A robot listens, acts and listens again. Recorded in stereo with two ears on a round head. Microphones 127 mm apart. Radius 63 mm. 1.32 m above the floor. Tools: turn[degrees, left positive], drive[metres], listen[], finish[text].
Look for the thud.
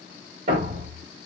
Thought: The thud: about 50° right or 130° right.
Action: turn[-50]
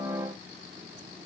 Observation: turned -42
Action: listen[]
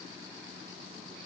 Action: finish[I heard a thud, but can't make it out now. It was about 5° right or 90° right.]